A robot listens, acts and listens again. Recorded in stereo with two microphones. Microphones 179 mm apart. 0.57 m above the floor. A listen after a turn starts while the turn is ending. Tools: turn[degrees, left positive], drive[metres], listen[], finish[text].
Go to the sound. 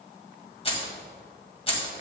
Thought: The keys jangling: about 30° left or 150° left.
Action: turn[30]
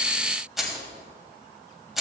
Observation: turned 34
Action: drive[1.0]
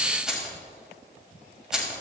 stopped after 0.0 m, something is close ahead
Action: finish[Blocked. The keys jangling is further on, straight ahead.]